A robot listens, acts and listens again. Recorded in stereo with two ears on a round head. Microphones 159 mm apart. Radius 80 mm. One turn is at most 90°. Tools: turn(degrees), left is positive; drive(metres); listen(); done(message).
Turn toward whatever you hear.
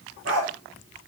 turn(degrees=-70)
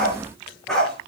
done("Found it: a dog barking, straight ahead, over 4 m away.")